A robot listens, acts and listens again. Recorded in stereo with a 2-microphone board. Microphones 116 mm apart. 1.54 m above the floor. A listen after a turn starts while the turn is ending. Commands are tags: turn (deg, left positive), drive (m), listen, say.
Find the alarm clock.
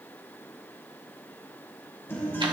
<listen/>
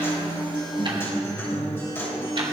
<listen/>
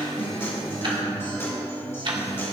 <say>I can't make out an alarm clock to turn to.</say>